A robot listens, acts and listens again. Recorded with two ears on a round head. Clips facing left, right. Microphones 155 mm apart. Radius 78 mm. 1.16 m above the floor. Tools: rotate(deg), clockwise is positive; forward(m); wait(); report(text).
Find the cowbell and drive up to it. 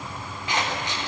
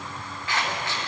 wait()
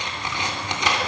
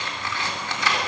wait()
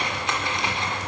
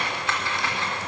report("I can't make out a cowbell, only scissors.")